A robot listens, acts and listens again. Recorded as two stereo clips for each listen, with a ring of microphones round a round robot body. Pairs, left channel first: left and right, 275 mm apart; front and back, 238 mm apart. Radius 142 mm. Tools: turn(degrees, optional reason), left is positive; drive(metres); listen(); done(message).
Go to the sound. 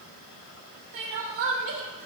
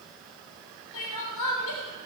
turn(degrees=-45, reason="The crying: 45° right.")
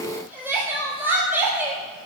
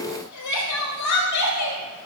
drive(metres=1.0)
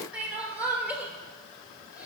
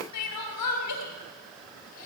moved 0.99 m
drive(metres=1.0)
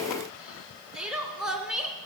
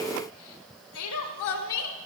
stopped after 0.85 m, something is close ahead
done("I am next to the crying.")